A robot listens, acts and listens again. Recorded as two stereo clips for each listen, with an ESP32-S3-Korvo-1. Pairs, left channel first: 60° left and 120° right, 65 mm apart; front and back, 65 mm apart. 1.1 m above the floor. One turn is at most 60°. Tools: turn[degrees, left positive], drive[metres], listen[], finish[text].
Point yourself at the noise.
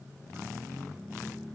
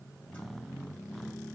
Action: listen[]
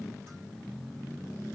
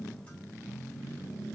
Action: listen[]
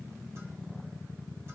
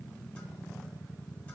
Action: finish[I can't make out anything.]